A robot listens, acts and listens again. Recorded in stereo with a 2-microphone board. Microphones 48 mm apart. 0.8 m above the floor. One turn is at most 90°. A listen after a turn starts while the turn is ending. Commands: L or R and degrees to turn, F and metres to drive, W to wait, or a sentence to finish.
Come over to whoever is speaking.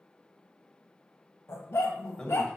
L20
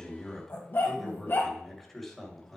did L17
F1.0
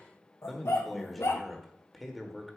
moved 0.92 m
F1.0
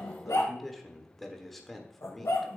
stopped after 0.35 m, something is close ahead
Arrived at the man speaking, straight ahead.